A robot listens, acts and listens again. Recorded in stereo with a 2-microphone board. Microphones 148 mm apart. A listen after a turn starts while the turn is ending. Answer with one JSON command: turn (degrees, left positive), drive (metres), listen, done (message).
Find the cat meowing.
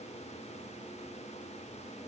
{"listen": true}
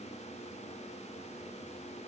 {"listen": true}
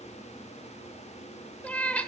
{"turn": 30}
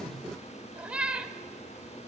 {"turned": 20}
{"turn": -10}
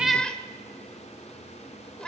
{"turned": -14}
{"done": "Found it: a cat meowing, straight ahead, 1 to 2 m away."}